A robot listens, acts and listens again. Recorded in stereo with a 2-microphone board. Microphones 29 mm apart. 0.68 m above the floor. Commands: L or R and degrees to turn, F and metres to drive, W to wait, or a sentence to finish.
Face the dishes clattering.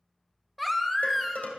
L75
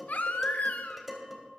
Facing the dishes clattering, 2 to 4 m away.